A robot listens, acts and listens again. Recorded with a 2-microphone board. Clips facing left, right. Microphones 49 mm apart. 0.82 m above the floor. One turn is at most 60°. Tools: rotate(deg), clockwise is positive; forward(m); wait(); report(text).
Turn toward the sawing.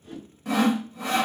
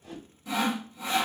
rotate(-50)
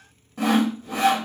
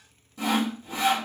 rotate(-60)
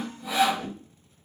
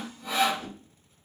report("Facing the sawing.")